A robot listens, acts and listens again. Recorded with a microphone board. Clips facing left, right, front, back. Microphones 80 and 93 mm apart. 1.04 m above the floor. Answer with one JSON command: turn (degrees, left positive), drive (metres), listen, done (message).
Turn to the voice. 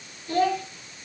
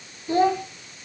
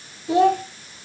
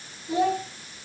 {"turn": -20}
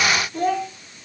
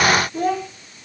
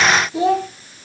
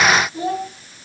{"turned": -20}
{"done": "Found it: a child speaking, straight ahead."}